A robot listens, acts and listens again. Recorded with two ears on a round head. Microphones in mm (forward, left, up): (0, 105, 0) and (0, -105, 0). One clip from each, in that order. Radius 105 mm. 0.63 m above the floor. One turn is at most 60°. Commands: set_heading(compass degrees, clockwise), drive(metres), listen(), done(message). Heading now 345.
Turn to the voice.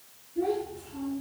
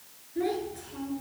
set_heading(45)
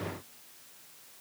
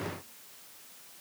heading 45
set_heading(75)
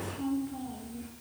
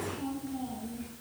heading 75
set_heading(85)
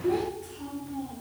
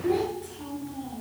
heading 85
done("Found it: a child speaking, straight ahead, over 4 m away.")